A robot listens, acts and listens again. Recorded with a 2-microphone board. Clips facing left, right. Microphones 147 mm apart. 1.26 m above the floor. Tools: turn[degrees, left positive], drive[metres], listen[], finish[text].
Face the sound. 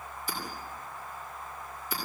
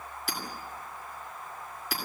Action: turn[-90]
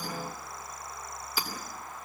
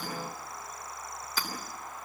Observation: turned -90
Thought: So it is at 10° left.
Action: turn[10]
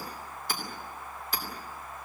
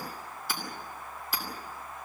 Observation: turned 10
Action: finish[Found it: hammering, straight ahead.]